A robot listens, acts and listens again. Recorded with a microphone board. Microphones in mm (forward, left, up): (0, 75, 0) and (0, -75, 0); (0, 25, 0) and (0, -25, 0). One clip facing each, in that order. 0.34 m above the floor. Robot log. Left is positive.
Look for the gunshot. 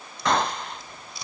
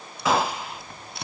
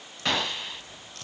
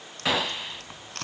cmd yaw -30
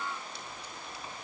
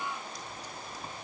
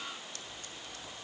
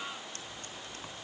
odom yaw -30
cmd idle
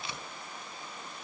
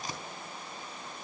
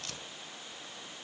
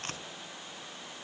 end: I heard a gunshot, but can't make it out now. It was about 25° left or 145° right.